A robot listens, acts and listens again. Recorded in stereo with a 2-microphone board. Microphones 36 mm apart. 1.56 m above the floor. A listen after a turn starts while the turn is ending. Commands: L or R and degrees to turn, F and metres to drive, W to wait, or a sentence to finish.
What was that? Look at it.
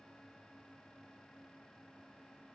W
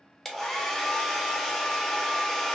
L30
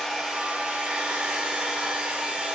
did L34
R25
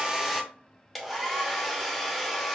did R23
Facing the hair dryer.